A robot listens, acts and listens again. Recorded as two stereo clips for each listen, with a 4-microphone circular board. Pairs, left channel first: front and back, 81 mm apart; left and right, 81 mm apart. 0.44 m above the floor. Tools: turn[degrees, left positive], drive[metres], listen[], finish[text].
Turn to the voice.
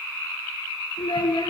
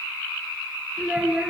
Thought: The child speaking: 15° right.
Action: turn[-15]
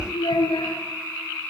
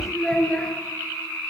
Action: finish[Found it: a child speaking, straight ahead, over 4 m away.]